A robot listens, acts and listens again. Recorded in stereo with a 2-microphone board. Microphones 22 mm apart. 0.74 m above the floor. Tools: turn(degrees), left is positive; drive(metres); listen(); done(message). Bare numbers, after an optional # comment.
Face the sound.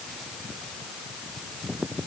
listen()
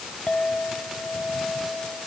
# The clink: about 75° left or 105° left.
turn(75)
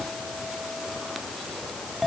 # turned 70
done("Found it: a clink, straight ahead.")